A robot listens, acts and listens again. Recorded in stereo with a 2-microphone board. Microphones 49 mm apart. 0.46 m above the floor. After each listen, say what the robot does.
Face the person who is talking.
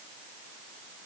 Keep listening.
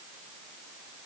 Keep listening.
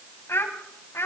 Turn 60° left.
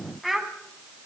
Facing the child speaking, 2 to 4 m away.